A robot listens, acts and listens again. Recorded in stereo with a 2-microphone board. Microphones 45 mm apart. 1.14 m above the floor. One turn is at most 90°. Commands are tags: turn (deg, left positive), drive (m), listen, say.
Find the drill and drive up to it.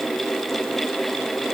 <listen/>
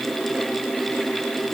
<listen/>
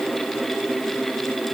<say>I can't make out a drill.</say>